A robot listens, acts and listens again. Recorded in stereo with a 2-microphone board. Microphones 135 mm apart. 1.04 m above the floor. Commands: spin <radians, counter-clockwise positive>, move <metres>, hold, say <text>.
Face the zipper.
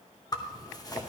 spin 0.52
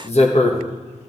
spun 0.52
spin 2.09
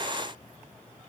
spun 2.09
hold
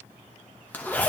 spin 0.26
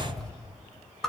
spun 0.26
say Found it: a zipper, straight ahead.